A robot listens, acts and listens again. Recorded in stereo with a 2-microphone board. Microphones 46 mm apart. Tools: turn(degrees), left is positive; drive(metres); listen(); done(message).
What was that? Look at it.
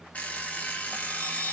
turn(degrees=35)
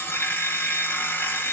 turn(degrees=105)
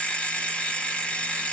turn(degrees=30)
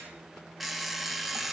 done("Found it: an alarm clock, straight ahead, 1 to 2 m away.")